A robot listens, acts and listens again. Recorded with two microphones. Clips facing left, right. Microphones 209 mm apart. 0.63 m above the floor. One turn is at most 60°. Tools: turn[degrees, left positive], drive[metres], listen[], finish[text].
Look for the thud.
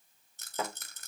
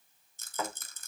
Thought: The thud: about 30° left or 150° left.
Action: turn[30]
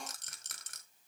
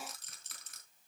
Action: listen[]
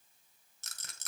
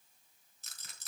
Action: finish[I heard a thud, but can't make it out now. It was about straight ahead or 120° left.]